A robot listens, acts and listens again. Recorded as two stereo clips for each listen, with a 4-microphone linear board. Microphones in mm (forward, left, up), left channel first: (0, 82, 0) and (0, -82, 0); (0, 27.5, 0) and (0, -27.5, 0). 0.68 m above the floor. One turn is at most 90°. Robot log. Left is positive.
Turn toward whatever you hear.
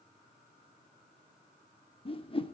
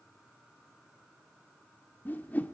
note: The whoosh: about 35° left or 145° left.
cmd yaw +35
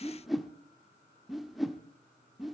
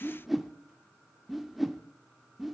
end: Found it: a whoosh, straight ahead, under 1 m away.